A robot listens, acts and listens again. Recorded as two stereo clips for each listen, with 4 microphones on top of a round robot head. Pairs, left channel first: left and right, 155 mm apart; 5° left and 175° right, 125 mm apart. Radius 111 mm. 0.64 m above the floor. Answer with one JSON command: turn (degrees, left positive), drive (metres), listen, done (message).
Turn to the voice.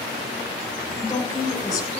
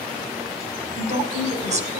{"turn": 160}
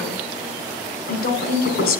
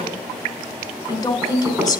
{"turn": 70}
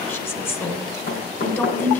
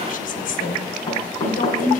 {"turn": 15}
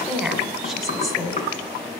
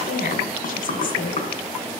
{"done": "Facing the woman speaking, 2 to 4 m away."}